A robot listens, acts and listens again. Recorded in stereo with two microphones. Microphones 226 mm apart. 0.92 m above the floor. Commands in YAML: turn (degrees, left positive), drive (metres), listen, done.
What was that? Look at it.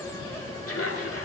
turn: 90
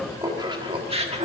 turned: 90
turn: -30
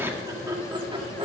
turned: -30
turn: -25
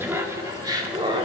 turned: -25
turn: -20
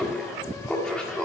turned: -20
done: "Found it: laughter, straight ahead."